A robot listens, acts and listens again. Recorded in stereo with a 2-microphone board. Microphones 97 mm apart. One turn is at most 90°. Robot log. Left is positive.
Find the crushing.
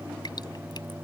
cmd idle
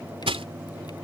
cmd yaw -90
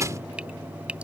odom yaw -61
note: So it is at 35° right.
cmd yaw -35
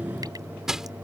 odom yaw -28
end: Facing the crushing.